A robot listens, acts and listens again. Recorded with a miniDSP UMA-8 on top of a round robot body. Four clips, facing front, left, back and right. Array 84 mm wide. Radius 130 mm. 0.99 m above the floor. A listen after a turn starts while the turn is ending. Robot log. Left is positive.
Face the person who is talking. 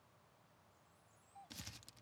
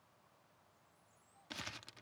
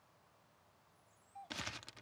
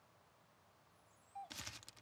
cmd idle
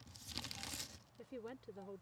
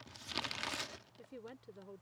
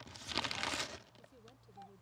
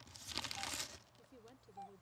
note: The woman speaking: 35° left.
cmd yaw +35
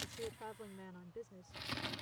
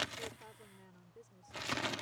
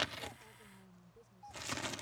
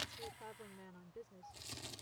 note: The woman speaking is now 15° right.
cmd yaw -15
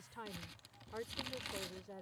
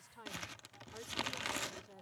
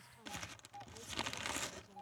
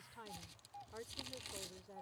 end: Found it: a woman speaking, straight ahead.